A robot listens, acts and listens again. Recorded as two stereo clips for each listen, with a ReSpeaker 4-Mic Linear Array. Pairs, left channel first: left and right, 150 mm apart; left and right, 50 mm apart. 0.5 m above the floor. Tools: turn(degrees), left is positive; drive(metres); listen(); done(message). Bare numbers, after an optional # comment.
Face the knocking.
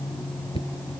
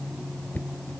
# The knocking: about 40° left or 140° left.
turn(40)
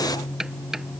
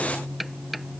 done("Facing the knocking.")